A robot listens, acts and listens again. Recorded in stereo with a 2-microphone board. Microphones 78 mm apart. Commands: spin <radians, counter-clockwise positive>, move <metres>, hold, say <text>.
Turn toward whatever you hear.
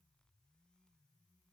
hold
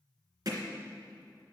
spin -0.96
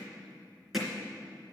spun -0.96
say Facing the hammering, 2 to 4 m away.